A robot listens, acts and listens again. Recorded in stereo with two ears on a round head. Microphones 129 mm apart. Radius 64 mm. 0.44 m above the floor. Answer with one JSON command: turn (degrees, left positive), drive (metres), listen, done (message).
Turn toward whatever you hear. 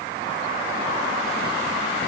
{"listen": true}
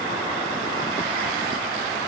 {"listen": true}
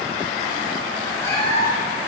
{"turn": 20}
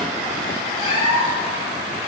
{"turn": 140}
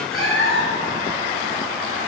{"done": "Found it: a cat meowing, straight ahead, 2 to 4 m away."}